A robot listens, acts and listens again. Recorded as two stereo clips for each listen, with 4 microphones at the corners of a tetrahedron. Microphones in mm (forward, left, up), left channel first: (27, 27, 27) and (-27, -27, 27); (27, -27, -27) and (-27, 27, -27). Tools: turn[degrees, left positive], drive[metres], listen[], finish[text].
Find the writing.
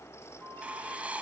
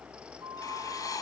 Thought: The writing: 65° right.
Action: turn[-65]
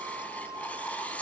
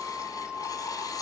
Thought: The writing is now 25° right.
Action: turn[-25]
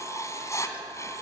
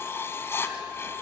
Thought: The writing is now 10° left.
Action: turn[10]
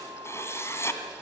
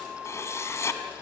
Action: finish[Facing the writing, 2 to 4 m away.]